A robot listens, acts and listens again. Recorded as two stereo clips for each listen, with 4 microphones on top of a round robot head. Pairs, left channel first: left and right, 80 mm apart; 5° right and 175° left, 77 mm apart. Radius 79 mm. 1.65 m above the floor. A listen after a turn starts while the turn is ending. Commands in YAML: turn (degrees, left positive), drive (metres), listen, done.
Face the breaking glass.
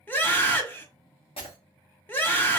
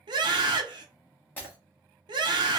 turn: 60
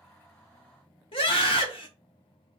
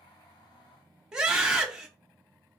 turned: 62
done: "Facing where the breaking glass came from. I can't hear it now."